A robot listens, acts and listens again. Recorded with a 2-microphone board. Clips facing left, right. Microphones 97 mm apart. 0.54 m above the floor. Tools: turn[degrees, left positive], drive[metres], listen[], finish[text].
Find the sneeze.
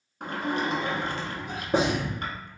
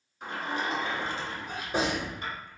Thought: The sneeze: about 20° left or 160° left.
Action: turn[20]
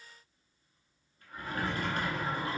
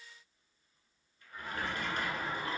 Action: listen[]
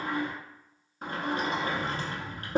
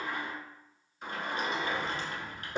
Action: finish[I heard a sneeze, but can't make it out now. It was about straight ahead or 140° left.]